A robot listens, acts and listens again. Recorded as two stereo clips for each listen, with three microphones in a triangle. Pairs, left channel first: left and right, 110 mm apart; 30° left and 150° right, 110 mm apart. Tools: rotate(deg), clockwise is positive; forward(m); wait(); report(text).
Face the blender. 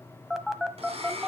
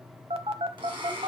rotate(110)
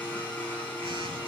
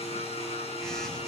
rotate(-15)
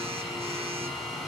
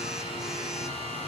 report("Facing the blender.")